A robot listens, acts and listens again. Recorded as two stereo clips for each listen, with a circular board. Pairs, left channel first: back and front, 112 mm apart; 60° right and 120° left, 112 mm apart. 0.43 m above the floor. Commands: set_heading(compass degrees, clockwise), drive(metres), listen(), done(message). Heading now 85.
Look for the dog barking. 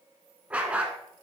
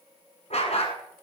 set_heading(165)
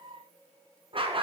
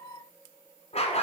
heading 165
set_heading(205)
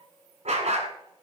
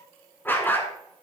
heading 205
set_heading(190)
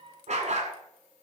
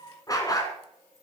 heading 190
done("Found it: a dog barking, straight ahead, 1 to 2 m away.")